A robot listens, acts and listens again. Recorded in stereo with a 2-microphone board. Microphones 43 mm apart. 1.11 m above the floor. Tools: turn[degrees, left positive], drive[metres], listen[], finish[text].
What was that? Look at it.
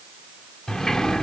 Thought: The sliding door: about 15° left or 165° left.
Action: turn[15]
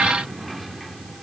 Action: listen[]
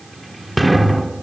Action: finish[Found it: a sliding door, straight ahead.]